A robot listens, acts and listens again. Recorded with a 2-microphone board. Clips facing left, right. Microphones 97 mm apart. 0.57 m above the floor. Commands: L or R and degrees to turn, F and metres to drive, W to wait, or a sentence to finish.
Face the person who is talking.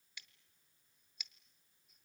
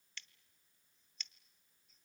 W
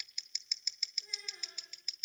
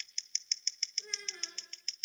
R65
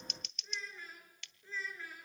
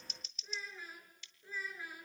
R15
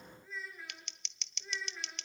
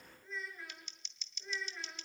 Facing the child speaking, over 4 m away.